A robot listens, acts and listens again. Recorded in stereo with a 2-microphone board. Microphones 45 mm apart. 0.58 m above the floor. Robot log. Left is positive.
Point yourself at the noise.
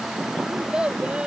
note: The child speaking: about 20° right or 160° right.
cmd yaw -20
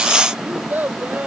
note: The child speaking: about 40° right or 140° right.
cmd yaw -40
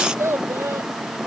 note: So it is at 105° right.
cmd yaw -105
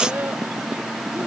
cmd idle
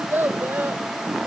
note: The child speaking is now 45° right.
cmd yaw -45
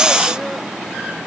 cmd idle
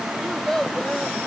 note: The child speaking is now 10° left.
cmd yaw +10
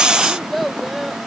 end: Facing the child speaking.